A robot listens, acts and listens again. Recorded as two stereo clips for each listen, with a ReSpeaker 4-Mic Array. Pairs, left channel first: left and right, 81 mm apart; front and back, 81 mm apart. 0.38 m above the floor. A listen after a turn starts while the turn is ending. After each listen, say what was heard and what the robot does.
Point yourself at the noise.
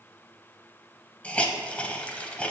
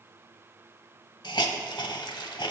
The hiss: 15° left. Turn 15° left.
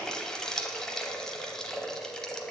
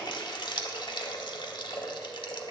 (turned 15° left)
Found it: a hiss, straight ahead.